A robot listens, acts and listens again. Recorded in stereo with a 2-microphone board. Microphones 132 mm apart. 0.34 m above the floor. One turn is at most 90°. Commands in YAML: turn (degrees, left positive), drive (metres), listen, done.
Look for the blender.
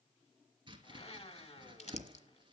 turn: 50
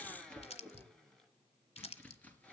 done: "Facing the blender, 1 to 2 m away."